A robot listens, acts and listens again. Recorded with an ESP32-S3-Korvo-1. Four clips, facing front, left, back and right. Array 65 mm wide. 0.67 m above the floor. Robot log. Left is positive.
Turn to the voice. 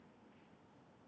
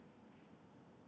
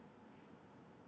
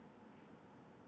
cmd idle
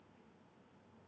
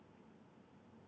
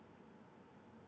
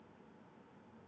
cmd idle
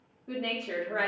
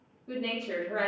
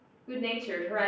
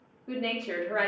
note: The woman speaking: 85° right.
cmd yaw -85
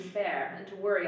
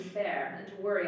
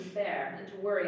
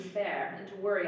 end: Facing the woman speaking, under 1 m away.